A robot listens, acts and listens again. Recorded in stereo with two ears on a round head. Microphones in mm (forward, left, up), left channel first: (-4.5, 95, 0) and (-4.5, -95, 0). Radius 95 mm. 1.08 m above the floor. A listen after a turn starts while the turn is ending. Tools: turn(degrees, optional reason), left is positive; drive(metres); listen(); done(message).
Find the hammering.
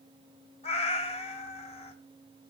listen()
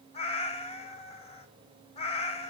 listen()
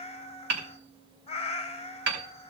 turn(degrees=-55, reason="The hammering: about 55° right or 125° right.")
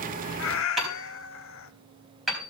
done("Found it: hammering, straight ahead.")